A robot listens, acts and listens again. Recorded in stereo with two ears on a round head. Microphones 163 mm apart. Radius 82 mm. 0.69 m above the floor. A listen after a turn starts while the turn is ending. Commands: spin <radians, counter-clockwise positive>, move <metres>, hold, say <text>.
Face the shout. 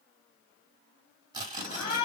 spin 0.79
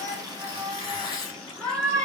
say Found it: a shout, straight ahead.